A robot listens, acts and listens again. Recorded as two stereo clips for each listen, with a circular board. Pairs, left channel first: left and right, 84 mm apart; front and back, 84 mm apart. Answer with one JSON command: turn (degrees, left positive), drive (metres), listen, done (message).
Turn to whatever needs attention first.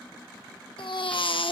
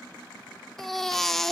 {"turn": 85}
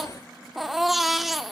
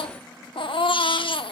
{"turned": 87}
{"done": "Facing the baby crying."}